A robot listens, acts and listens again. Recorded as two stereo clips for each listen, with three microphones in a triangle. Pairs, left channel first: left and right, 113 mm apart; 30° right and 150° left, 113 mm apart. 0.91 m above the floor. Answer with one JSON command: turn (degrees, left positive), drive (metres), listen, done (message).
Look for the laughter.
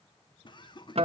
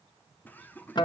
{"turn": 45}
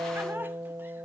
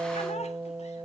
{"listen": true}
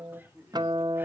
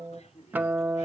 {"listen": true}
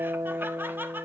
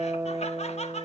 {"turn": -15}
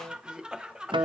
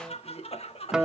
{"done": "Found it: laughter, straight ahead."}